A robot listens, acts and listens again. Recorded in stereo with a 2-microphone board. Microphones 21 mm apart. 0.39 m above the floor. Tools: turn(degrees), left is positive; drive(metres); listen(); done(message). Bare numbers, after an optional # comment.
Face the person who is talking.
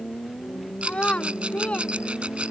# The child speaking: about 60° left or 120° left.
turn(60)
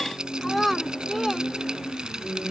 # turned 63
done("Facing the child speaking.")